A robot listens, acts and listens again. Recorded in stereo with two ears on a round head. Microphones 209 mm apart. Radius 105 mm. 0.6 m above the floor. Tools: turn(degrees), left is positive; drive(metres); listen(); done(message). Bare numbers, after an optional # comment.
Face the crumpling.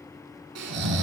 listen()
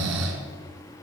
listen()
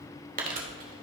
# The crumpling: about 35° right or 145° right.
turn(-35)
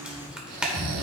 done("Facing the crumpling.")